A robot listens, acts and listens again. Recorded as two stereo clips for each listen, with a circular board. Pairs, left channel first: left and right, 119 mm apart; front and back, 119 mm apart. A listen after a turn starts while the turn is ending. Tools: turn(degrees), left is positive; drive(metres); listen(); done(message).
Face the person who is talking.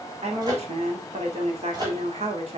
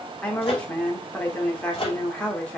turn(degrees=-80)
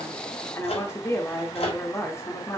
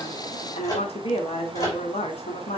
turn(degrees=20)
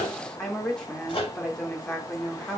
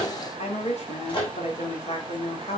done("Found it: a woman speaking, straight ahead.")